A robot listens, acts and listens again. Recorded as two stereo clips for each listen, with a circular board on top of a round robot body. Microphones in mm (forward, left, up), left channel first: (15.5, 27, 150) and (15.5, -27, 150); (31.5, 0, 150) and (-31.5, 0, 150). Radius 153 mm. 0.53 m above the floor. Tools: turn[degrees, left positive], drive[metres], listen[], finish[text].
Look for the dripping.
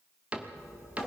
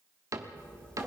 Thought: The dripping: 65° left.
Action: turn[65]
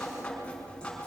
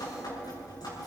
Thought: The dripping is now 15° left.
Action: turn[15]
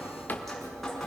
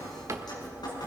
Action: finish[Found it: dripping, straight ahead.]